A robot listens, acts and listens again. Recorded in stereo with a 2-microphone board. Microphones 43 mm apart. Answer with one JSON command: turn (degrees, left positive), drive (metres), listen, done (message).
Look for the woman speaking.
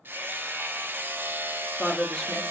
{"turn": 30}
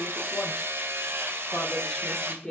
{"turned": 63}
{"turn": 165}
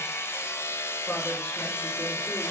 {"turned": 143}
{"turn": 20}
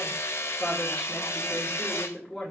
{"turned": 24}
{"turn": 10}
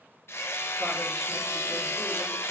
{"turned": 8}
{"listen": true}
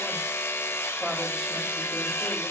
{"listen": true}
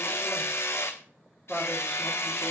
{"done": "Found it: a woman speaking, straight ahead."}